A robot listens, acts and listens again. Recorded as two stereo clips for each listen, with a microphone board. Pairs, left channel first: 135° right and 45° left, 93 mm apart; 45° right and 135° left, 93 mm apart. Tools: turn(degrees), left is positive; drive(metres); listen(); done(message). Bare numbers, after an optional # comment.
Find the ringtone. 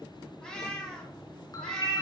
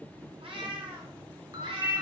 # The ringtone: straight behind.
turn(180)
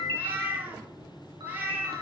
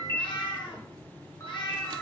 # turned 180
# The ringtone is now 15° left.
turn(15)
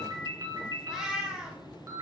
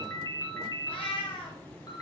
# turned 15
done("Found it: a ringtone, straight ahead, 2 to 4 m away.")